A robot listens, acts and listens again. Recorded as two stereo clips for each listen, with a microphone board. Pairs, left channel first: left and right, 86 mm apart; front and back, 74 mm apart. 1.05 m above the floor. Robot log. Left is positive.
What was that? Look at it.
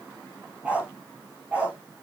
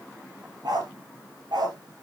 note: The dog barking: 165° right.
cmd yaw -165
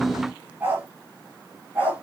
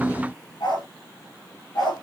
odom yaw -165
note: The dog barking is now 20° right.
cmd yaw -20
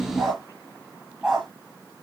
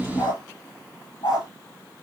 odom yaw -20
end: Found it: a dog barking, straight ahead.